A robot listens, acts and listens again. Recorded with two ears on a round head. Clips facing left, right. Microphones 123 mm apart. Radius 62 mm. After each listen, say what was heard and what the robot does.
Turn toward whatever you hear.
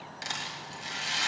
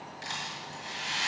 The rattle: about 70° left or 110° left. Turn 70° left.
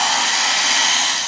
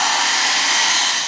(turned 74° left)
So it is at 30° left. Turn 30° left.
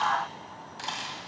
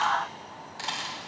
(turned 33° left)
Keep listening.
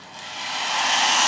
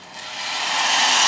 Found it: a rattle, straight ahead.